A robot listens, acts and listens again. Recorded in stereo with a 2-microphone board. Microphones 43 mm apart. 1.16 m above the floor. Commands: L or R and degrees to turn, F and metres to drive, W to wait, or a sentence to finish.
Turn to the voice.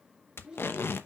R15
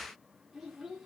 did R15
Found it: a child speaking, straight ahead.